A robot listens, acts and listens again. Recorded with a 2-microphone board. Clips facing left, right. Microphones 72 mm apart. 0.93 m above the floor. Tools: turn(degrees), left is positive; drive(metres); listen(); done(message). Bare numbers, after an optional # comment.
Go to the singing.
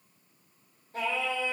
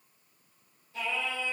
# The singing: about 45° left or 135° left.
turn(45)
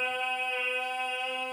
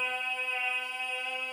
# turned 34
# So it is at 100° left.
turn(100)
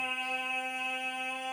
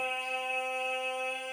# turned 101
drive(1.0)
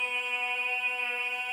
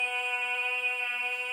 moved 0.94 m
drive(1.0)
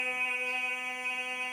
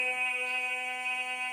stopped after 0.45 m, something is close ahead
# The singing is now 10° left.
turn(10)
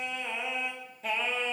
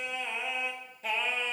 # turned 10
done("Arrived at the singing, straight ahead.")